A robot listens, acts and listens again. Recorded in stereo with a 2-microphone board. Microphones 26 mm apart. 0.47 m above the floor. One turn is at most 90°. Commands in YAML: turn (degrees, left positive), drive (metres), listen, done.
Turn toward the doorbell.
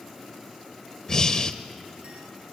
listen: true
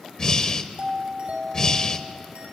turn: -65
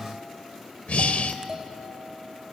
turn: -25
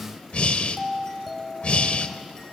done: "Found it: a doorbell, straight ahead."